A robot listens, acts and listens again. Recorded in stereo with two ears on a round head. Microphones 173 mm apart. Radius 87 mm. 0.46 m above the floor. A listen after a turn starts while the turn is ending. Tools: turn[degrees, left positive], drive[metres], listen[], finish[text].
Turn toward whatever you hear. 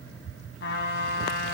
Thought: The trumpet: about 65° left or 115° left.
Action: turn[65]
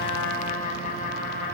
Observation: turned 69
Thought: So it is at 45° left.
Action: turn[45]
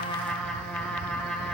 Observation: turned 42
Action: finish[Facing the trumpet.]